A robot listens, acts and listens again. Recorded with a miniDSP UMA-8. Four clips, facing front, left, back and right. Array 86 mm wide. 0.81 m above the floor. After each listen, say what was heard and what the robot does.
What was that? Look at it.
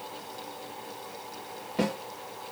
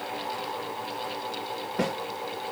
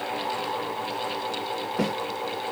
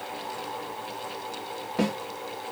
The snare drum: 55° right. Turn 55° right.
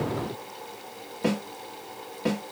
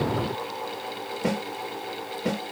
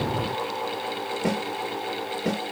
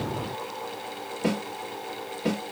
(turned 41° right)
The snare drum is now 15° right. Turn 15° right.
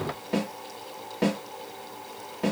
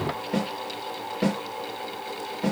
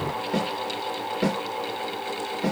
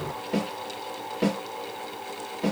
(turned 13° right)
Facing the snare drum, 1 to 2 m away.